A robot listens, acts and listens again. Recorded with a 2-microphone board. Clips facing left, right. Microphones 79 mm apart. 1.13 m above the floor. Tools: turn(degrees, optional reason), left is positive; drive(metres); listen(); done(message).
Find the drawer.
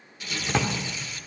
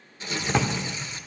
turn(degrees=-30)
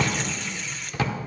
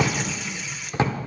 turn(degrees=-145, reason="So it is at 145° right.")
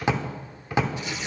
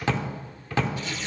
turn(degrees=20, reason="The drawer is now 20° left.")
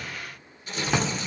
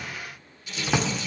done("Found it: a drawer, straight ahead.")